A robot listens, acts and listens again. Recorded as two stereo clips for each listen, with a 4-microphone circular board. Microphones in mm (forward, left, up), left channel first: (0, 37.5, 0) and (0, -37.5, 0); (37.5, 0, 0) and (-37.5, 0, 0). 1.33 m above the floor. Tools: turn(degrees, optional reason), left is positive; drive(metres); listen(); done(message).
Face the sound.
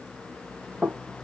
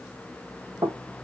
turn(degrees=-165, reason="The knocking: 165° right.")
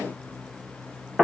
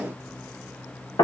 turn(degrees=-10, reason="The knocking is now 10° right.")
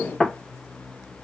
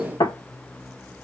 done("Found it: knocking, straight ahead.")